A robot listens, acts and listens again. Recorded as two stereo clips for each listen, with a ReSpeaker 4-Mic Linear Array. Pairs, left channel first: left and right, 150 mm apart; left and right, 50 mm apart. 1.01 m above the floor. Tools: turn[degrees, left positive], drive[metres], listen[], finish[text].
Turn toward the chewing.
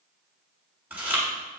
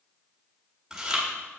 Action: turn[-30]
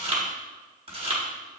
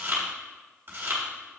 Thought: So it is at 140° right.
Action: turn[-140]
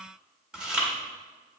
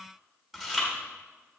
Action: finish[Facing the chewing.]